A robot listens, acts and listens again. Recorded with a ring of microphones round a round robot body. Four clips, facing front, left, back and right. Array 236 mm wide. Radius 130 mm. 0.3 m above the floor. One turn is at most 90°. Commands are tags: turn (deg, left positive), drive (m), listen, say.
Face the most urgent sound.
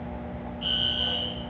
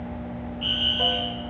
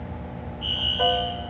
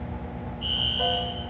<turn deg="50"/>
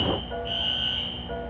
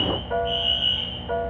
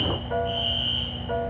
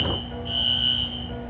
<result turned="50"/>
<turn deg="-10"/>
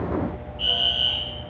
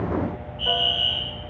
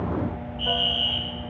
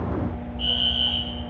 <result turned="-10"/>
<say>Facing the fire alarm, over 4 m away.</say>